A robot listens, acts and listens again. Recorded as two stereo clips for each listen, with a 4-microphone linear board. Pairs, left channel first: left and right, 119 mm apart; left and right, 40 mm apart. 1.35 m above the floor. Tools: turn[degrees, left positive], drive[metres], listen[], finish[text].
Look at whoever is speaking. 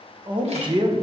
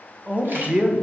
Thought: The man speaking: about 40° right or 140° right.
Action: turn[-40]
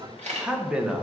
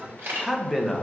Thought: So it is at 10° right.
Action: turn[-10]
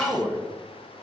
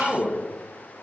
Action: finish[Facing the man speaking, 1 to 2 m away.]